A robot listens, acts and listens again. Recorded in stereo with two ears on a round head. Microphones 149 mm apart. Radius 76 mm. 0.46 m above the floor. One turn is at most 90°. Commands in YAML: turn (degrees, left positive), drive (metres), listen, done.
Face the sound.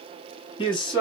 turn: 30
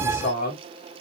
turn: 90
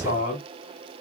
turn: 45
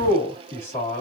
turn: 15
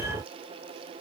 listen: true
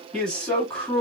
done: "Facing the man speaking."